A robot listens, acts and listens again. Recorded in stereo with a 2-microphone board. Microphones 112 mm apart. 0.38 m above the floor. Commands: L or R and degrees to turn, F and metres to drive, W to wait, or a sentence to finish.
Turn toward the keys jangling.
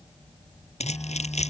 L90
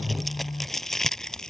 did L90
Facing the keys jangling.